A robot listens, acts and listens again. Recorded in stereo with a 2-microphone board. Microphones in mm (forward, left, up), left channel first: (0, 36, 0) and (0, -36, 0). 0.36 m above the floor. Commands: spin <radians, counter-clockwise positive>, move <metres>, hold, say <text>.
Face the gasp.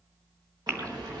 spin -0.70
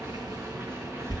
hold
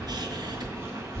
say I heard a gasp, but can't make it out now. It was about straight ahead or 100° right.